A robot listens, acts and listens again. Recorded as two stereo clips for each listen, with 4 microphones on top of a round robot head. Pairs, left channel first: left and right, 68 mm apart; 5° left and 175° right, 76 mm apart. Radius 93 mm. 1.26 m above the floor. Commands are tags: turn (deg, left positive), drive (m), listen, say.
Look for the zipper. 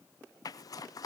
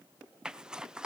<turn deg="105"/>
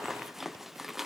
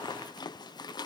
<say>Facing the zipper.</say>